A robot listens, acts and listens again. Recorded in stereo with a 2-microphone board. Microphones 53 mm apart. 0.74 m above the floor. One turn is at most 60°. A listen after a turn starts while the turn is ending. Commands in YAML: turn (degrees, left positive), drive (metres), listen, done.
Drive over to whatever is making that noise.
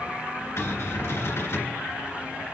turn: 55
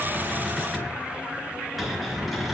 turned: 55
drive: 1.0
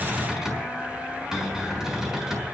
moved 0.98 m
turn: -10
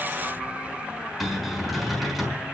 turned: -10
drive: 1.0
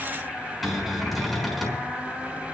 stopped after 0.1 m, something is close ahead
done: "Something is in my way. I am facing the cupboard door but have not reached it."